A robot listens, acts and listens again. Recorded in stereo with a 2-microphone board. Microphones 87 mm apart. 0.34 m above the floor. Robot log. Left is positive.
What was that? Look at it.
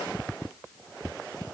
cmd idle
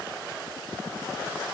cmd idle
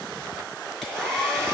cmd yaw +30
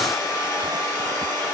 note: So it is at 145° left.
cmd yaw +145
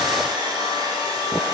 note: The hair dryer is now 50° right.
cmd yaw -50
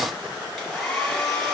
end: Found it: a hair dryer, straight ahead, over 4 m away.